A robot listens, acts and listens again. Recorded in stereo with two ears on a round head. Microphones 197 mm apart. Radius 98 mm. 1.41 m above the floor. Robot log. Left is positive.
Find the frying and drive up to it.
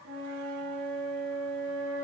cmd idle
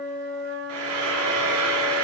note: The frying: about 75° right or 105° right.
cmd yaw -75
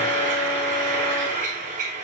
note: So it is at 35° right.
cmd yaw -35
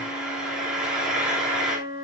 cmd fwd 1.0
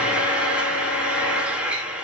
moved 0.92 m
cmd fwd 1.0
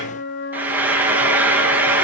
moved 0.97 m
note: The frying is now 10° right.
cmd yaw -10
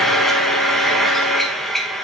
cmd fwd 1.0
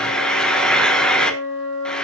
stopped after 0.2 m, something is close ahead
end: I am next to the frying.